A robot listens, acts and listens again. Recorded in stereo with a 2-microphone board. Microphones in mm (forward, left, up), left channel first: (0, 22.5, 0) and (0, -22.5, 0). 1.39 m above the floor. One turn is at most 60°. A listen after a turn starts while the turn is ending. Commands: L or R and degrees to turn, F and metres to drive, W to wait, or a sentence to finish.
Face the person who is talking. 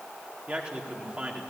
R30
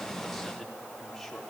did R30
Facing the man speaking.